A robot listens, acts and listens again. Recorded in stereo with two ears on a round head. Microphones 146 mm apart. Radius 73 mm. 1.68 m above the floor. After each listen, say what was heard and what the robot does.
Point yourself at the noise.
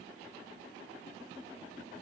Keep listening.
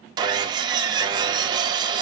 The sawing: about 25° right or 155° right. Turn 25° right.
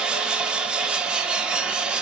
Found it: sawing, straight ahead.